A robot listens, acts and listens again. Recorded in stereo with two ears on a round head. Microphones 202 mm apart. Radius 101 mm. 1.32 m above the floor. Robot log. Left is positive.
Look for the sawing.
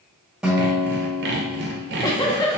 note: The sawing: about 50° right or 130° right.
cmd yaw -50
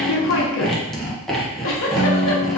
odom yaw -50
end: Found it: sawing, straight ahead.